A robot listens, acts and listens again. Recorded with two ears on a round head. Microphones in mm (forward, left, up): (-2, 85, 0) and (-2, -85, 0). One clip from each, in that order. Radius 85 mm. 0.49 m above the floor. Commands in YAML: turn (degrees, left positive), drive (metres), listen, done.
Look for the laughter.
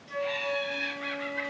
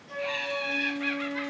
turn: -30
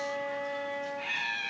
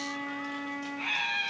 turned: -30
turn: -115
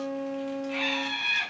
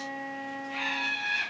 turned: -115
turn: 45
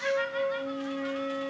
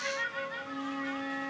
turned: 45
turn: 15
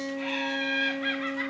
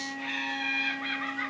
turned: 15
done: "Facing the laughter."